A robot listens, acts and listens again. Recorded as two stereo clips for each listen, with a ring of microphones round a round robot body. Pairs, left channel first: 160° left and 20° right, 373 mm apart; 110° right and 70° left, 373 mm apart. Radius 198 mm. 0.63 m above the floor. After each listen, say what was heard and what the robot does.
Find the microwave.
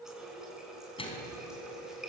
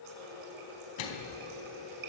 The microwave: 125° right. Turn 125° right.
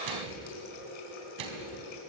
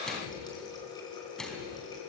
The microwave is now 25° right. Turn 25° right.
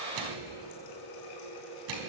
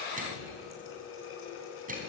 Facing the microwave, 2 to 4 m away.